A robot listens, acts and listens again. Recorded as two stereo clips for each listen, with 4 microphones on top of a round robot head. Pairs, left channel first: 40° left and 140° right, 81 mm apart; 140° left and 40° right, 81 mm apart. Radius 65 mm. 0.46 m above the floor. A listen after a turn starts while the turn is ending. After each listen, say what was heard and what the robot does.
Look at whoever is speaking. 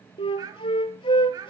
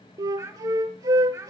The child speaking: 100° right. Turn 100° right.
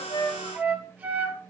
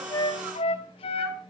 Keep listening.
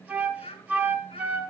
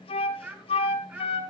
The child speaking is now 35° left. Turn 35° left.
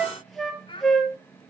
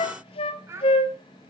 The child speaking is now 15° left. Turn 15° left.
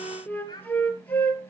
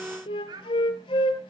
Found it: a child speaking, straight ahead, over 4 m away.